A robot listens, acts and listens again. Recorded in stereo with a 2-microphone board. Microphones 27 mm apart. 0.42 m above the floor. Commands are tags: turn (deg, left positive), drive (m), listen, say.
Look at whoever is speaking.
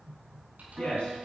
<turn deg="45"/>
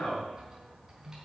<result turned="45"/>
<turn deg="90"/>
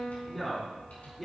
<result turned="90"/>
<say>Facing the man speaking.</say>